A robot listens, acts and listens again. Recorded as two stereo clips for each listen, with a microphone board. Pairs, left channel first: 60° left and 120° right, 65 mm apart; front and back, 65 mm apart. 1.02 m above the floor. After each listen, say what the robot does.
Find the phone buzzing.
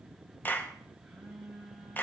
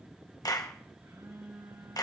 Turn 150° left.
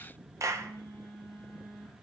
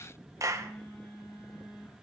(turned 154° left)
Facing the phone buzzing.